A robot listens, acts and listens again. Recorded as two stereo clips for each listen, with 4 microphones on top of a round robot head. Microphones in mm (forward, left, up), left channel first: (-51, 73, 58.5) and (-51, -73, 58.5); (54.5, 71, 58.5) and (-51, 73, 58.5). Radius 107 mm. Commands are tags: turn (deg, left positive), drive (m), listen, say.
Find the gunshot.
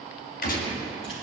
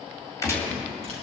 <turn deg="60"/>
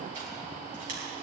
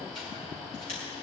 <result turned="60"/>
<say>Facing where the gunshot came from. I can't hear it now.</say>